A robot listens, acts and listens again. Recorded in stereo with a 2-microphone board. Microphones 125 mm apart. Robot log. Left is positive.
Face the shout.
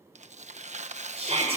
note: The shout: about 55° right or 125° right.
cmd yaw -55
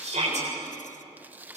note: So it is at 70° right.
cmd yaw -70
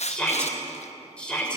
note: The shout is now 10° left.
cmd yaw +10
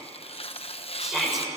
end: Facing the shout.